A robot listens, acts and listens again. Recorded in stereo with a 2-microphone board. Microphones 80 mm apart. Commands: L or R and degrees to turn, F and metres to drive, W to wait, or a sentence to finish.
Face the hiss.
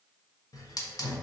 L50
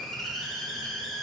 Facing the hiss, under 1 m away.